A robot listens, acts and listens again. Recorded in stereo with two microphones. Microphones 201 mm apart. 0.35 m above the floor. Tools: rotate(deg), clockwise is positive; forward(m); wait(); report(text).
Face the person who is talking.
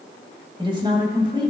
rotate(25)
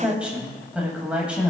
report("Facing the woman speaking, 1 to 2 m away.")